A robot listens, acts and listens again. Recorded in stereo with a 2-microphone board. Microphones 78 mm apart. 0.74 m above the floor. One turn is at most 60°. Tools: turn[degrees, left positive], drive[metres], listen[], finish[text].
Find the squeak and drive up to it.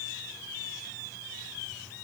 Action: listen[]
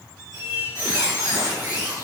Thought: The squeak: about 60° right or 120° right.
Action: turn[-60]
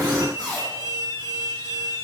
Thought: So it is at 60° right.
Action: turn[-60]
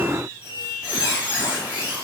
Thought: The squeak is now 20° right.
Action: turn[-20]
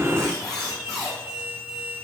Action: drive[1.0]
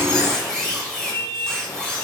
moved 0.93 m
Action: drive[1.0]
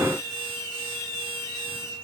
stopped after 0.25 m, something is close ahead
Action: finish[I am next to the squeak.]